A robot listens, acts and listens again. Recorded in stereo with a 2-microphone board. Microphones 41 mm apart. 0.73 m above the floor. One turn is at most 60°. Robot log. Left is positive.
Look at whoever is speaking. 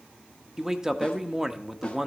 cmd yaw -30
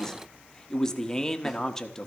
note: So it is at 20° left.
cmd yaw +20
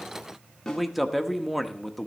end: Facing the man speaking, 1 to 2 m away.